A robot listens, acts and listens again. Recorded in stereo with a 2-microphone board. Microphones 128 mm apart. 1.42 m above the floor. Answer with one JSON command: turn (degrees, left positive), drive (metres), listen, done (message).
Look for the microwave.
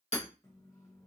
{"turn": 25}
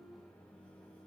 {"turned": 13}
{"turn": 10}
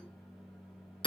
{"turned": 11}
{"done": "Found it: a microwave, straight ahead, under 1 m away."}